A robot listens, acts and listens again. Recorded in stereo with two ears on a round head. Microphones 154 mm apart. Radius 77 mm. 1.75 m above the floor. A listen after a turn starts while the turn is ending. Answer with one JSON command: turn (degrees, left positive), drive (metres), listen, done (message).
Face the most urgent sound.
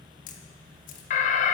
{"turn": 45}
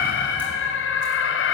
{"turn": 90}
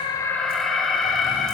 {"done": "Facing the alarm, 1 to 2 m away."}